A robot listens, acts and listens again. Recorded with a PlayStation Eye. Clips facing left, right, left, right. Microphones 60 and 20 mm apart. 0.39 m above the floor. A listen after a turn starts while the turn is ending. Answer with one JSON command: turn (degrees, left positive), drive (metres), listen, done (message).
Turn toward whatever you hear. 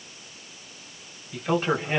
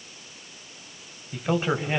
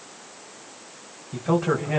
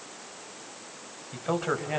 {"turn": -30}
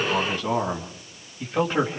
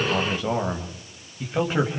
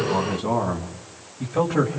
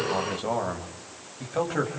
{"turn": -30}
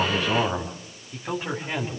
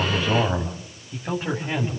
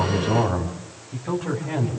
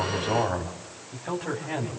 {"turn": -30}
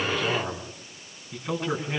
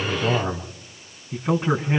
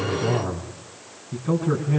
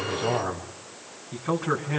{"turn": -145}
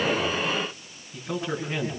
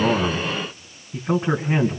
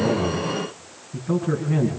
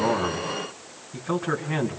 {"turn": -35}
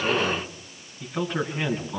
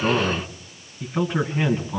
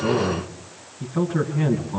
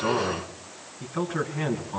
{"done": "Facing the man speaking, 2 to 4 m away."}